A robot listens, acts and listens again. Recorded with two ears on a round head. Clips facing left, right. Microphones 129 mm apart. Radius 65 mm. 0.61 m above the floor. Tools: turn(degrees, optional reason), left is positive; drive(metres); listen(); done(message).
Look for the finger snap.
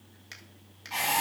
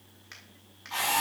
turn(degrees=30, reason="The finger snap: about 30° left or 150° left.")
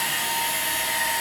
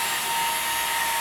listen()
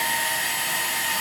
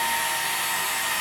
listen()
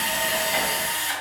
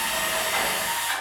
done("I heard a finger snap, but can't make it out now. It was about straight ahead or 120° left.")